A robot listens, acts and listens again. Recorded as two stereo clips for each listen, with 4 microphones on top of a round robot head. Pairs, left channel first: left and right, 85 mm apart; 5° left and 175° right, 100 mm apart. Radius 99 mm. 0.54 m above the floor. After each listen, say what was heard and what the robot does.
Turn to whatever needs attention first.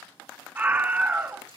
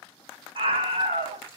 The scream: 165° right. Turn 165° right.
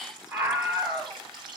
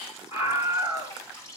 The scream is now 30° right. Turn 30° right.
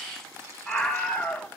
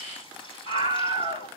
Found it: a scream, straight ahead, 2 to 4 m away.